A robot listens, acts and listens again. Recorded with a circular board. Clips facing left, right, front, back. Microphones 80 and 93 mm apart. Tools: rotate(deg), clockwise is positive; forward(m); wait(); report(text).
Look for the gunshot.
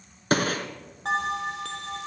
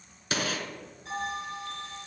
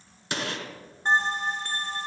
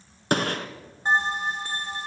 rotate(-140)
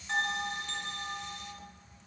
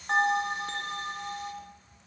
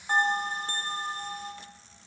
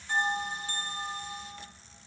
report("Facing where the gunshot came from. I can't hear it now.")